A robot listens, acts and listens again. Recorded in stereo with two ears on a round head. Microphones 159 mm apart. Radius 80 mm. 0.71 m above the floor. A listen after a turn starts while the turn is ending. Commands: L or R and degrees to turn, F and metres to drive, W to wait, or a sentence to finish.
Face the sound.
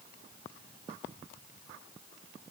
W
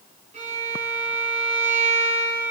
R40
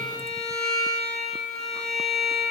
Facing the violin, 2 to 4 m away.